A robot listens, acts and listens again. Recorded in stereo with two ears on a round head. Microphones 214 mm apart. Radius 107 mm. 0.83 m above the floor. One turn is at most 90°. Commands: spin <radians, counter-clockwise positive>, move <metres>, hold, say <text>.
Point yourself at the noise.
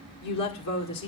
spin 1.57
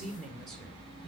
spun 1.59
say Found it: a woman speaking, straight ahead, 2 to 4 m away.